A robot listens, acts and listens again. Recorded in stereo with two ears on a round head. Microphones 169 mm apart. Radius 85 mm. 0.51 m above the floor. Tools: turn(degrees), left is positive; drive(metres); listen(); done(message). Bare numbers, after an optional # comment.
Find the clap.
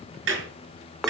# The clap: about 65° right or 115° right.
turn(-65)
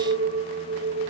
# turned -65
listen()
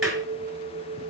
done("Found it: a clap, straight ahead, over 4 m away.")